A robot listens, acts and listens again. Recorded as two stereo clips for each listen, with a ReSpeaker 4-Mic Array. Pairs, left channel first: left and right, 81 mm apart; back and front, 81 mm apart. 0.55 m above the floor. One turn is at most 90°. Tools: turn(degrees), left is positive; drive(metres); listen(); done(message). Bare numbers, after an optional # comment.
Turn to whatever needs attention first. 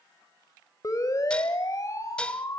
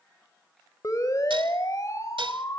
# The siren: 135° left.
turn(90)
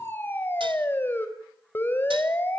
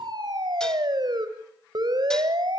# The siren is now 25° left.
turn(25)
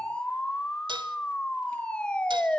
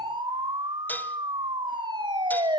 # The siren is now 10° left.
turn(10)
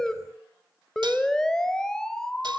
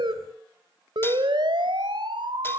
done("Found it: a siren, straight ahead, 2 to 4 m away.")